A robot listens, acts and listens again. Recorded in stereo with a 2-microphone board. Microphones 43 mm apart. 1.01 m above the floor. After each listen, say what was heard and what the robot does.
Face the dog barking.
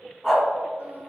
Turn 30° right.
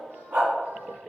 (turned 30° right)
So it is at 130° right. Turn 130° right.
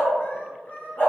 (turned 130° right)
The dog barking is now 50° left. Turn 50° left.
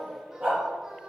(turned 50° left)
Facing the dog barking.